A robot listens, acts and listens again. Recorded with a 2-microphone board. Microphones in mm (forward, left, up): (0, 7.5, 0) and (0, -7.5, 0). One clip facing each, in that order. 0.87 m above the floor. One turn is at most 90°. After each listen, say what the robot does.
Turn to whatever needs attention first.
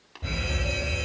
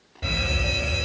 Turn 65° right.
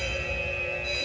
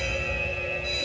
Turn 20° right.
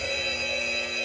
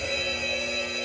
Facing the fire alarm, 2 to 4 m away.